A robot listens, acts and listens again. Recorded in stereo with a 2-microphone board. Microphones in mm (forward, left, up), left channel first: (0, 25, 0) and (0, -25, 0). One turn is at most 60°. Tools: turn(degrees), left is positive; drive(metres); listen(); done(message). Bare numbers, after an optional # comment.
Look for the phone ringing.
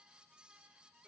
listen()
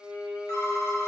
# The phone ringing: about 70° left or 110° left.
turn(60)
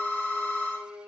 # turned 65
# So it is at 35° left.
turn(35)
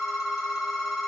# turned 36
done("Found it: a phone ringing, straight ahead.")